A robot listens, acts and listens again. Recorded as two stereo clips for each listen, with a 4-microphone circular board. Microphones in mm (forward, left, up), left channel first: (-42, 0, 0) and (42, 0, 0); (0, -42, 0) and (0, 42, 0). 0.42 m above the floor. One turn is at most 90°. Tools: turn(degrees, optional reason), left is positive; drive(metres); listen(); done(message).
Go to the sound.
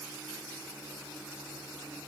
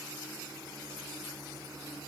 listen()
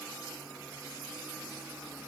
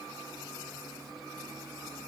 listen()
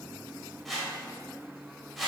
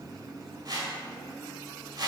turn(degrees=90, reason="The whoosh: 90° left.")
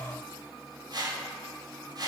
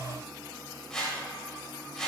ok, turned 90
turn(degrees=-10, reason="The whoosh is now 10° right.")
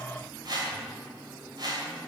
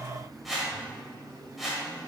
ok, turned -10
drive(metres=1.0)
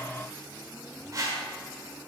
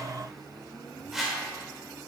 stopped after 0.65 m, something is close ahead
done("I am next to the whoosh.")